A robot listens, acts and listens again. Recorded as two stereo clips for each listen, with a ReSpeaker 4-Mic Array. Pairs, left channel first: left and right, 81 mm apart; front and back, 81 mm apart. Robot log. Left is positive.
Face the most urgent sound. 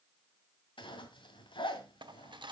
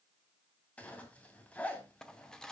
cmd idle
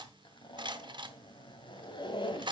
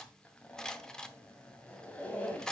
cmd idle
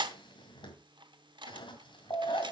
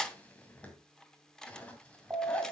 note: The alarm: 115° left.
cmd yaw +115
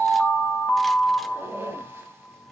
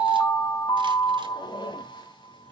note: The alarm is now 10° left.
cmd yaw +10
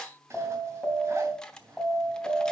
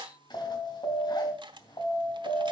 end: Facing the alarm.